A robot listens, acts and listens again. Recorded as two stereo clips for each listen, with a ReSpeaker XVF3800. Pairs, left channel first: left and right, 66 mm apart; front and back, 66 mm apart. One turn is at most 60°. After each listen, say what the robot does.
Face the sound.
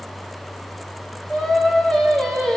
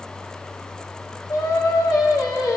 Turn 10° left.
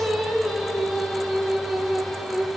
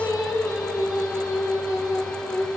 Facing the singing.